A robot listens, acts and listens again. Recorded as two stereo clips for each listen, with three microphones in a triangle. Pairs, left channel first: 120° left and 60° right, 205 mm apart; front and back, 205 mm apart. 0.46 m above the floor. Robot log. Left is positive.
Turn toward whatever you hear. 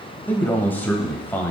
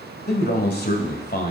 note: The man speaking: 40° left.
cmd yaw +40
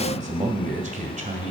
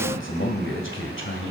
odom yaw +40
note: The man speaking is now 10° right.
cmd yaw -10
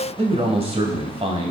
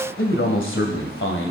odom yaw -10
end: Found it: a man speaking, straight ahead.